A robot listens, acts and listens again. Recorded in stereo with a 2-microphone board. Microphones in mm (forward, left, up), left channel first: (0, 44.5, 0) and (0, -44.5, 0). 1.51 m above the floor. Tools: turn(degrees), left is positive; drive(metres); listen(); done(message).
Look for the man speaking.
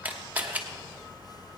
listen()
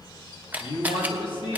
turn(degrees=60)
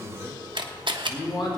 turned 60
turn(degrees=70)
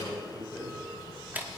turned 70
done("Found it: a man speaking, straight ahead, 2 to 4 m away.")